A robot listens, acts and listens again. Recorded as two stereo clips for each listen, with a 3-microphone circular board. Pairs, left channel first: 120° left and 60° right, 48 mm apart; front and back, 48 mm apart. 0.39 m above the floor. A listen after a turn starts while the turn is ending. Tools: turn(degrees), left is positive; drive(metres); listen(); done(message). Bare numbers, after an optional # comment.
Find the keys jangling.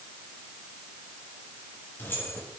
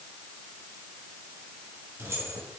# The keys jangling: 165° left.
turn(165)
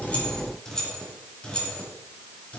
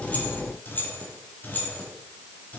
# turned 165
# The keys jangling is now 55° left.
turn(55)
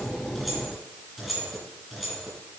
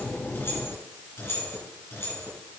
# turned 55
# The keys jangling is now 30° left.
turn(30)
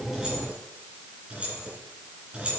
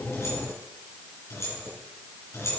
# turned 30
done("Found it: keys jangling, straight ahead, 2 to 4 m away.")